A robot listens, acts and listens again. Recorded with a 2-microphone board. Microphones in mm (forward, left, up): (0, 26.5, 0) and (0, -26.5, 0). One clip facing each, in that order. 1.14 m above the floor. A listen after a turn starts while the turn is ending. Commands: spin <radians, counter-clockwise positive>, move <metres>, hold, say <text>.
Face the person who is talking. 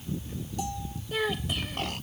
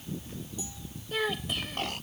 spin 0.52
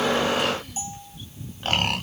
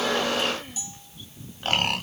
hold
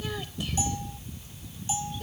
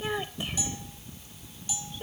hold
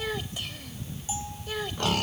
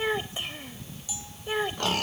spin -0.44
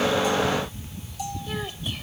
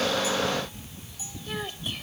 say Facing the child speaking.